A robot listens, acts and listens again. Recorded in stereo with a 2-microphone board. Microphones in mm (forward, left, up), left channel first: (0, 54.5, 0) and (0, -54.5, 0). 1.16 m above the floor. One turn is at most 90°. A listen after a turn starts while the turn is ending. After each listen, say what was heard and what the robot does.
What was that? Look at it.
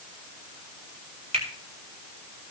The finger snap: about 70° right or 110° right. Turn 70° right.
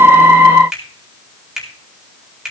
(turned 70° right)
Facing the finger snap, over 4 m away.